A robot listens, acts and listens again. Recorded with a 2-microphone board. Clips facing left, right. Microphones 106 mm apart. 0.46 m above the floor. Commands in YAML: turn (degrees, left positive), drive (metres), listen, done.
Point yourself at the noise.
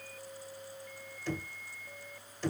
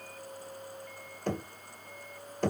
turn: -50
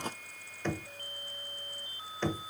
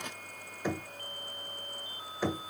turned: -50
turn: -10
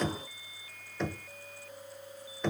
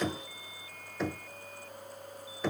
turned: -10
done: "Found it: knocking, straight ahead, 1 to 2 m away."